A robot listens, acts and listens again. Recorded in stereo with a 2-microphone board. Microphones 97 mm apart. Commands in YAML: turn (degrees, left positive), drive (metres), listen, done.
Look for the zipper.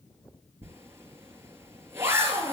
turn: -25
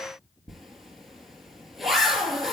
done: "Facing the zipper, 2 to 4 m away."